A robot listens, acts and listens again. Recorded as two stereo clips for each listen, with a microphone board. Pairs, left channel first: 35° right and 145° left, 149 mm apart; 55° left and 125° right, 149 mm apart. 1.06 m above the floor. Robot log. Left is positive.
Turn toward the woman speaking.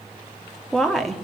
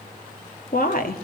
note: The woman speaking: 55° left.
cmd yaw +55
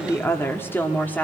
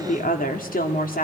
note: The woman speaking is now 45° left.
cmd yaw +45
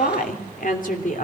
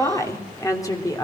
note: The woman speaking is now 10° right.
cmd yaw -10
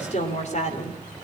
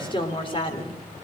end: Found it: a woman speaking, straight ahead, 2 to 4 m away.